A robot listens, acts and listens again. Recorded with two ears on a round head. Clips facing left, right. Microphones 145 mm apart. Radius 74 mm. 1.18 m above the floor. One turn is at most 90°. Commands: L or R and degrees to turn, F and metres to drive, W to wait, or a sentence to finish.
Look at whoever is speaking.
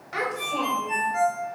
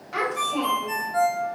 R30
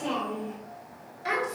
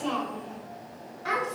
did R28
L15
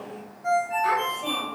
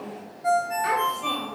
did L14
Facing the child speaking, over 4 m away.